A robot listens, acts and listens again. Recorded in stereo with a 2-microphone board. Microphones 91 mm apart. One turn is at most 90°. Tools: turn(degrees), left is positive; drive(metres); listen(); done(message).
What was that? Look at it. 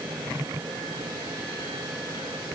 listen()
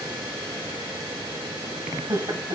turn(degrees=-55)
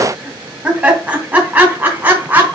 turn(degrees=-20)
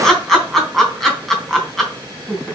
done("Facing the laughter, 2 to 4 m away.")